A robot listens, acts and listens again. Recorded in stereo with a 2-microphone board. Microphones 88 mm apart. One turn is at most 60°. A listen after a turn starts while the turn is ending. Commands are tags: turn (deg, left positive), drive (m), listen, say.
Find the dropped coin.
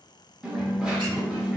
<turn deg="-30"/>
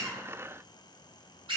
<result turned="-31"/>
<listen/>
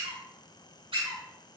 <say>I heard a dropped coin, but can't make it out now. It was about 25° left or 140° right.</say>